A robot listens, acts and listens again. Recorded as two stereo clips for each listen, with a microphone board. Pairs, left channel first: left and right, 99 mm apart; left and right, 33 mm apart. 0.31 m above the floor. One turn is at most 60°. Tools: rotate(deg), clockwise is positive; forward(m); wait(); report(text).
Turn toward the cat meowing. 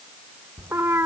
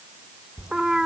rotate(25)
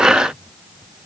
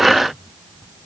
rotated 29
wait()
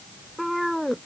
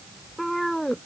report("Found it: a cat meowing, straight ahead.")